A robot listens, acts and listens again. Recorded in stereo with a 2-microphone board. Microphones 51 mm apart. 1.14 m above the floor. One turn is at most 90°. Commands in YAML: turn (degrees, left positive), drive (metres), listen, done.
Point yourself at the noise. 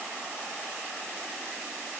listen: true
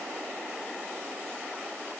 listen: true
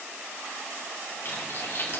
turn: 55
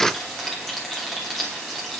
done: "Found it: frying, straight ahead, 2 to 4 m away."